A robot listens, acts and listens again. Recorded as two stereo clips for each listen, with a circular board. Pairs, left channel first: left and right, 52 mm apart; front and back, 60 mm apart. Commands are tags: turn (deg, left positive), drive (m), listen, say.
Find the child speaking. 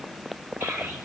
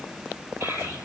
<turn deg="-140"/>
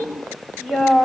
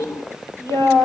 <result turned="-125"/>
<turn deg="-25"/>
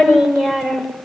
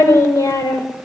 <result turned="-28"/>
<say>Found it: a child speaking, straight ahead.</say>